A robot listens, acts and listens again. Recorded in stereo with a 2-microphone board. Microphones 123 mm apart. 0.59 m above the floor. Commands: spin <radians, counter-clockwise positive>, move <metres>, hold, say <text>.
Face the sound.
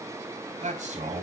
spin -1.57
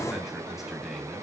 hold
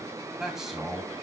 say Facing the man speaking, 2 to 4 m away.